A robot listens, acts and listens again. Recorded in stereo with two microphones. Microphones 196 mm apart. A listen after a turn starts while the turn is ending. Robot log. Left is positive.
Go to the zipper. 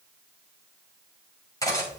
cmd idle
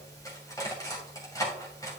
cmd idle
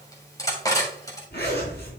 note: The zipper: about 55° left or 125° left.
cmd yaw +55
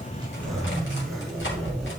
cmd fwd 1.0
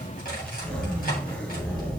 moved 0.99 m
cmd fwd 1.0
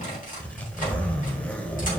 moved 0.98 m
cmd fwd 1.0
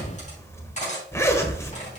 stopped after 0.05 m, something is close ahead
note: The zipper is now 15° left.
cmd yaw +15
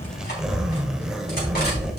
end: Arrived at the zipper, straight ahead.